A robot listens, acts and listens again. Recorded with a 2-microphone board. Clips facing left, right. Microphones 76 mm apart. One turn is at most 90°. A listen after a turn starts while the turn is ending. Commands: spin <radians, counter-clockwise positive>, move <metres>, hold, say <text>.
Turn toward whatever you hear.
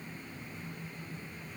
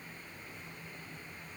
hold
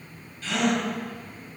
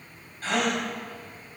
spin -0.79
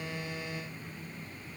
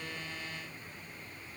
hold
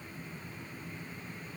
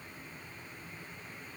say I heard a gasp, but can't make it out now. It was about straight ahead or 90° right.